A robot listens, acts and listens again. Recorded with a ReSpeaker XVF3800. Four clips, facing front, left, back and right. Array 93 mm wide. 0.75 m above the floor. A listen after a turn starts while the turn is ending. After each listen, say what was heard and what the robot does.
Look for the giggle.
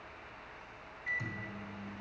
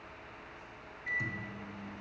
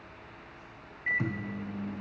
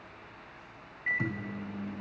Keep listening.
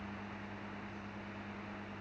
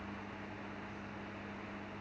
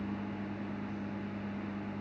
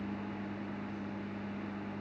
Keep listening.
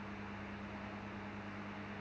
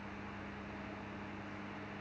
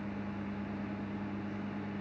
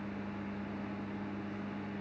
I can't make out a giggle, only a microwave.